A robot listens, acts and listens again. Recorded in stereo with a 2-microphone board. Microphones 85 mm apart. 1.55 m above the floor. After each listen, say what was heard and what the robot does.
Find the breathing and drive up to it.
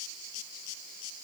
Keep listening.
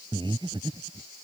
The breathing: about 70° right or 110° right. Turn 70° right.
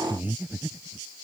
So it is at 20° right. Turn 20° right.
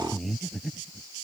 Drive 1.0 m forward.
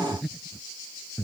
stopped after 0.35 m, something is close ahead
Blocked. The breathing is further on, straight ahead.